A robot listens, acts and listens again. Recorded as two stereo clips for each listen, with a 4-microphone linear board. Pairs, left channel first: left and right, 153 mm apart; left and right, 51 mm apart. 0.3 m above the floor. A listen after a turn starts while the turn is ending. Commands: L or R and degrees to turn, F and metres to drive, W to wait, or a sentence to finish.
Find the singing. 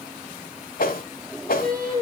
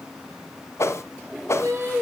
R75
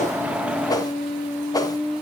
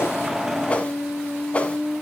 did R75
Found it: singing, straight ahead, 2 to 4 m away.